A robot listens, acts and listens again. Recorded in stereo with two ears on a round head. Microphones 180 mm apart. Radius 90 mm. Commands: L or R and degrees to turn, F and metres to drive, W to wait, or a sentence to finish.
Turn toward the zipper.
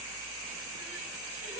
W
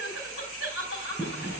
L30
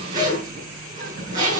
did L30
R20
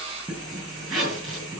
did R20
Found it: a zipper, straight ahead.